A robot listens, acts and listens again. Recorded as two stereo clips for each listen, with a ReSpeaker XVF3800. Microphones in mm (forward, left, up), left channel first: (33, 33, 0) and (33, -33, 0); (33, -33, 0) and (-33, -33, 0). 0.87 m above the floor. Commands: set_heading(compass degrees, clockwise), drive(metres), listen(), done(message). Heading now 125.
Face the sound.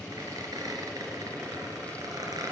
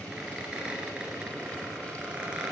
set_heading(235)
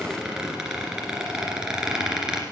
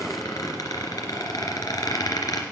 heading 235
set_heading(245)
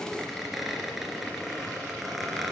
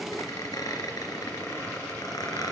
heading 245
done("Facing the squeak.")